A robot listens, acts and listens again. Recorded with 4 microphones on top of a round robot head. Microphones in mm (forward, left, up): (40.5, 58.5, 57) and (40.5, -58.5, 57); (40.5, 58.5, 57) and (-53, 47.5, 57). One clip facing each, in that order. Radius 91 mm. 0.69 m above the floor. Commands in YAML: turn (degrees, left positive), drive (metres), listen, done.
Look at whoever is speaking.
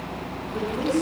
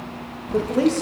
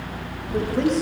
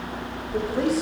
turn: -90
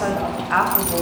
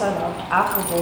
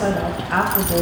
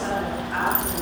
turn: -15
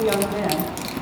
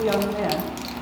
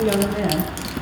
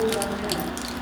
done: "Facing the woman speaking, over 4 m away."